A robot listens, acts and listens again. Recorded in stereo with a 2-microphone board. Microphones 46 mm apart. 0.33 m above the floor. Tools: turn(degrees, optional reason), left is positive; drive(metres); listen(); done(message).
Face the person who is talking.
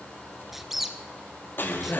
turn(degrees=65, reason="The man speaking: about 65° left or 115° left.")
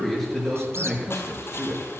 done("Facing the man speaking.")